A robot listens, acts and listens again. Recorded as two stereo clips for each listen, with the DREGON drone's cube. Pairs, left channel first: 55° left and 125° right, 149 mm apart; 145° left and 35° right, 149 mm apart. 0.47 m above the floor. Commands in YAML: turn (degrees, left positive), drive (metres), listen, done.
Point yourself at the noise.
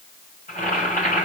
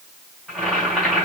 turn: 60
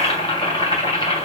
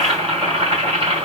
turn: 10
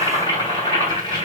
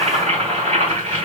done: "Found it: boiling, straight ahead, 2 to 4 m away."